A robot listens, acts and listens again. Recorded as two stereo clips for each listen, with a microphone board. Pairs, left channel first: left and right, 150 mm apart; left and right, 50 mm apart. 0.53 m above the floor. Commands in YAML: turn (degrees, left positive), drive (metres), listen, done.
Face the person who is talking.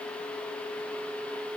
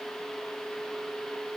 listen: true
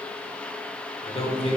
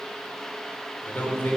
turn: 40
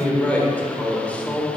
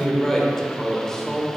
turn: 10
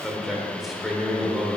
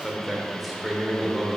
done: "Facing the man speaking, 1 to 2 m away."